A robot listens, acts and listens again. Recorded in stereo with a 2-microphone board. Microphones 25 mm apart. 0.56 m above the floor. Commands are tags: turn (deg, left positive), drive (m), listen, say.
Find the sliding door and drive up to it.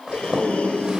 <turn deg="-65"/>
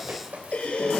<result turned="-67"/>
<listen/>
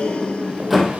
<drive m="1.0"/>
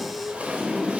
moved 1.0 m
<drive m="1.0"/>
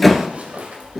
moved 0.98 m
<turn deg="10"/>
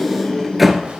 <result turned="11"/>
<drive m="1.0"/>
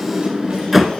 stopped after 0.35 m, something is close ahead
<say>Arrived at the sliding door, straight ahead.</say>